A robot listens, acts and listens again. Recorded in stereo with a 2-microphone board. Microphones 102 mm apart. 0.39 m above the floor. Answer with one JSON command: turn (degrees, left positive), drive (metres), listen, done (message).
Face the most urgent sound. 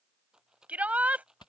{"turn": -30}
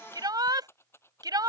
{"turn": -135}
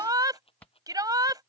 {"turn": -45}
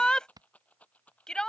{"turn": 10}
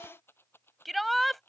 {"done": "Found it: a shout, straight ahead."}